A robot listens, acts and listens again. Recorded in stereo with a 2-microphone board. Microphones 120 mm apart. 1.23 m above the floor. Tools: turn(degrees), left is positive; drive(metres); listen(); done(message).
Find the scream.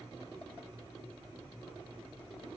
listen()
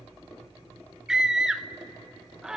turn(degrees=-30)
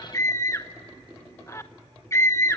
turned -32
turn(degrees=25)
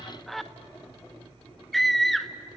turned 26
done("Found it: a scream, straight ahead.")